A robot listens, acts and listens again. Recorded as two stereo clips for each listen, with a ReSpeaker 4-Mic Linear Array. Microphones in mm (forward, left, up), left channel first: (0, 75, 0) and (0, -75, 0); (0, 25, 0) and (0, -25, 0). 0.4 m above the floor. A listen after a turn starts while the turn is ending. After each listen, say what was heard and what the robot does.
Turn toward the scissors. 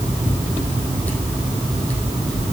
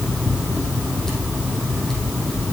Keep listening.
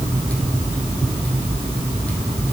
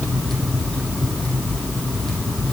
Keep listening.
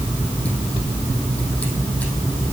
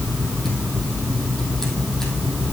I can't make out scissors.